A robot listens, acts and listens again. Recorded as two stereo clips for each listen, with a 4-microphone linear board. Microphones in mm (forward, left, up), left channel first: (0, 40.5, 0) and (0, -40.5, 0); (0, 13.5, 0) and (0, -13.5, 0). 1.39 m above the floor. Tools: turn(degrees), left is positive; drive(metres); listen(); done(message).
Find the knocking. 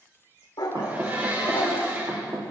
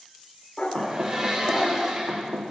turn(degrees=-65)
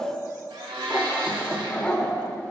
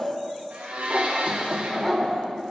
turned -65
listen()
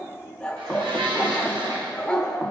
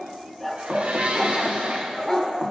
listen()
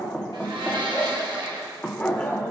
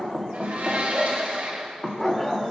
done("Facing the knocking.")